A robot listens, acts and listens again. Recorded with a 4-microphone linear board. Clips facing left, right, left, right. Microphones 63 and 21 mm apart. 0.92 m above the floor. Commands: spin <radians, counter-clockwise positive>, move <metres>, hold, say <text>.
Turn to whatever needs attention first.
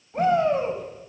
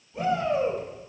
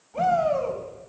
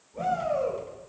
spin 1.13
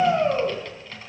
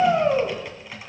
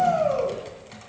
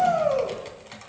say Found it: a shout, straight ahead.